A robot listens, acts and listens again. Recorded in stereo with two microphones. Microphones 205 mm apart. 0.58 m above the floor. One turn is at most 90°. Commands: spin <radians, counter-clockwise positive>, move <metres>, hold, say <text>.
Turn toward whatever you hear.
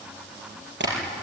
spin -1.22
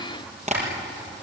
spin -0.70
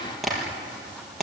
say Facing the tapping, over 4 m away.